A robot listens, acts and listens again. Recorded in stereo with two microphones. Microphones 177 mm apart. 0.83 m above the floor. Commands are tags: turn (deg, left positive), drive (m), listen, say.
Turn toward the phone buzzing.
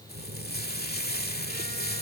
<turn deg="-60"/>
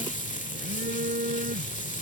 <turn deg="-60"/>
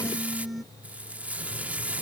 <say>Found it: a phone buzzing, straight ahead.</say>